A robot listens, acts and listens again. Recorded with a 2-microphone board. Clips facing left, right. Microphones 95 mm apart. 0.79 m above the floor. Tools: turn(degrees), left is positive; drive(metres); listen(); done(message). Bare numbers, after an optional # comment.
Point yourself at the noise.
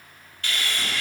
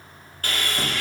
# The sawing: about 45° right or 135° right.
turn(-45)
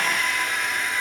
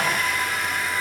done("Facing the sawing, 1 to 2 m away.")